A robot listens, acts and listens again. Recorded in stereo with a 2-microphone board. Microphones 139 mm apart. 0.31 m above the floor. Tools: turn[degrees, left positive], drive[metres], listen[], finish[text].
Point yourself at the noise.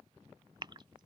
Thought: The gasp: about 35° right or 145° right.
Action: turn[-35]
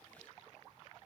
Action: listen[]
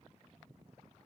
Action: finish[I heard a gasp, but can't make it out now. It was about straight ahead or 110° right.]